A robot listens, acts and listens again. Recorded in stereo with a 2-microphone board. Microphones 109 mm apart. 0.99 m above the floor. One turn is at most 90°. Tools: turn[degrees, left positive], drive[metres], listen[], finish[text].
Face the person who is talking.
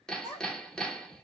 Thought: The child speaking: about 50° left or 130° left.
Action: turn[50]
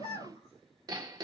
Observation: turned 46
Thought: So it is at 80° left.
Action: turn[80]
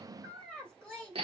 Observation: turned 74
Action: finish[Facing the child speaking, 2 to 4 m away.]